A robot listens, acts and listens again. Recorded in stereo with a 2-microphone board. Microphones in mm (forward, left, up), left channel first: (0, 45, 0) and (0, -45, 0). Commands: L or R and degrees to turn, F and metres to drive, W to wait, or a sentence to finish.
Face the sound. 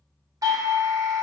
R45
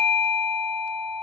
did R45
Found it: a doorbell, straight ahead.